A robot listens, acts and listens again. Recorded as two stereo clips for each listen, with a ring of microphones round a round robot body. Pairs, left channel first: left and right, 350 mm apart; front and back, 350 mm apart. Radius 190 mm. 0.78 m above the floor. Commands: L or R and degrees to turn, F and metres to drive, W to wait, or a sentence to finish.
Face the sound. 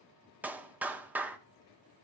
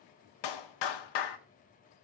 Found it: a clap, straight ahead, 1 to 2 m away.